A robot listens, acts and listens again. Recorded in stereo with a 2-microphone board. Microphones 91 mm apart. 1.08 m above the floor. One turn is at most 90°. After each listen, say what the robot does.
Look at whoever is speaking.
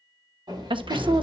Turn 65° right.
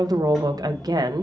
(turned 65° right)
Turn 50° right.
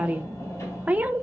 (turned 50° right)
Turn 15° right.
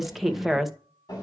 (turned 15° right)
Found it: a woman speaking, straight ahead.